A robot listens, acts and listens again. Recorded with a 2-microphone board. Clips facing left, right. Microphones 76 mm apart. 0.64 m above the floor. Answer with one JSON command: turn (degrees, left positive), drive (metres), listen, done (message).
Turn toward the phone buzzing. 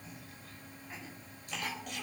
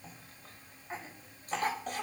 {"listen": true}
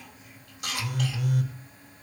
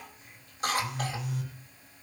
{"turn": 70}
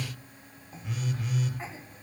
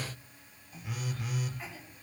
{"done": "Facing the phone buzzing, over 4 m away."}